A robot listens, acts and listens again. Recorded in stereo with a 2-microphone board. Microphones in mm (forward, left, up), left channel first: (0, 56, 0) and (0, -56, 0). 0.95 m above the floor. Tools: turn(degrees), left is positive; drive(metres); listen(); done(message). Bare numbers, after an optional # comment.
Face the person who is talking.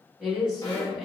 turn(-30)
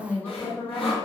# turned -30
# So it is at 25° left.
turn(25)
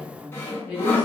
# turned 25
# The woman speaking is now 10° right.
turn(-10)
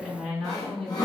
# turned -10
done("Found it: a woman speaking, straight ahead.")